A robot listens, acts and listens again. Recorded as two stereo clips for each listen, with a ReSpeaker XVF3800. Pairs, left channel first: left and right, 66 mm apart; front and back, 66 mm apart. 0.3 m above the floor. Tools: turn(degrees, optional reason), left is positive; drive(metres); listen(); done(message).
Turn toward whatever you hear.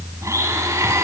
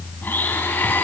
turn(degrees=-55, reason="The blender: 55° right.")
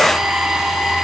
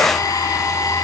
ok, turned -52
done("Found it: a blender, straight ahead.")